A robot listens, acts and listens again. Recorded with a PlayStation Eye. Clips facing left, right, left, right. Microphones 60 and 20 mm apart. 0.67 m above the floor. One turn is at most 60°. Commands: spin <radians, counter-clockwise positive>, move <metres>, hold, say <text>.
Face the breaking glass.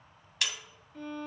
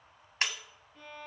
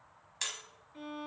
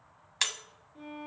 spin -0.70
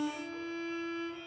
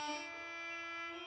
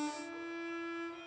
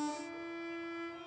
hold
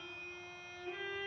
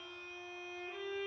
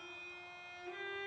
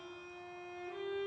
say I heard breaking glass, but can't make it out now. It was about straight ahead or 100° right.